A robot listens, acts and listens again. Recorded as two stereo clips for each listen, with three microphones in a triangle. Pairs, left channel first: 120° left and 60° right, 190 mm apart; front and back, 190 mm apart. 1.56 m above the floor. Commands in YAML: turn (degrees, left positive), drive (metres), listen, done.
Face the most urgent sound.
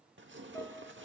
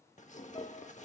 listen: true
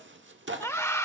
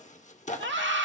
turn: -165
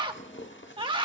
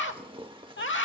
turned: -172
done: "Found it: a scream, straight ahead."